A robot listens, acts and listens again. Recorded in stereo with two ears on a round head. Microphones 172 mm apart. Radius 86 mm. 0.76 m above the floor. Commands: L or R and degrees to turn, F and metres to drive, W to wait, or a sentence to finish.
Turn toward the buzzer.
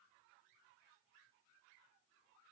W
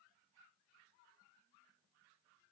W
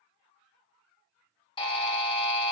L25
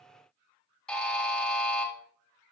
Found it: a buzzer, straight ahead, 1 to 2 m away.